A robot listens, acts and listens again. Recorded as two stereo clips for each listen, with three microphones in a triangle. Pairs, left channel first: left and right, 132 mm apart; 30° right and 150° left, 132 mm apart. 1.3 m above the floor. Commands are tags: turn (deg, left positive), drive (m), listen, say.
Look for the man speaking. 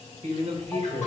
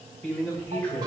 <turn deg="-80"/>
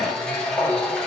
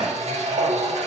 <listen/>
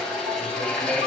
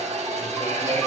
<listen/>
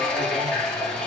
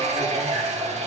<say>Facing where the man speaking came from. I can't hear it now.</say>